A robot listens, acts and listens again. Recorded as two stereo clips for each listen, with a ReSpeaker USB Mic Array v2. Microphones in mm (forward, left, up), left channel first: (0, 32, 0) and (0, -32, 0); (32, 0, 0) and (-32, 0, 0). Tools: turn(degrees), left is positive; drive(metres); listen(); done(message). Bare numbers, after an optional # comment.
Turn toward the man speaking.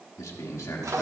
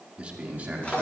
# The man speaking: 120° left.
turn(120)
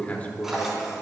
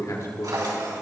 # The man speaking is now 25° left.
turn(25)
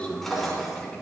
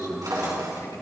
# The man speaking is now 25° left.
turn(25)
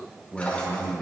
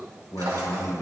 # The man speaking is now 10° left.
turn(10)
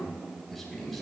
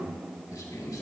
done("Found it: a man speaking, straight ahead.")